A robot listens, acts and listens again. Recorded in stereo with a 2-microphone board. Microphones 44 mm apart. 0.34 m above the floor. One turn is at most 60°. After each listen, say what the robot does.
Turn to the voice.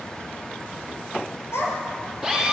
Turn 60° left.
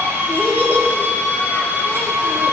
Turn 50° left.
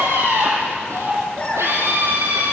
Turn 30° left.
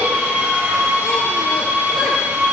Keep listening.
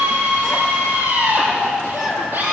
Found it: a child speaking, straight ahead.